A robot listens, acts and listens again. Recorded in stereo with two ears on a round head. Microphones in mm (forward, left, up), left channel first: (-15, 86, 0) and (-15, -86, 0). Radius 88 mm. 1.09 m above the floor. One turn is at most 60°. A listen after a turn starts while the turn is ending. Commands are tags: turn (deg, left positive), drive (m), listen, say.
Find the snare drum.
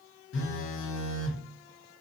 <listen/>
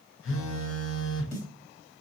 <turn deg="40"/>
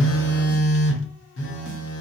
<listen/>
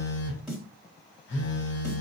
<say>Found it: a snare drum, straight ahead, 1 to 2 m away.</say>